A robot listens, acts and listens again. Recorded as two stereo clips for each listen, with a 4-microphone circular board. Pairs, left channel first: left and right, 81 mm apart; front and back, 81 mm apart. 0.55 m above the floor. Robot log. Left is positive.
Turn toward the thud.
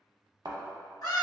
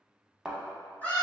note: The thud: 100° right.
cmd yaw -100
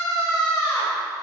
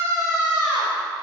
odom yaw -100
end: Facing where the thud came from. I can't hear it now.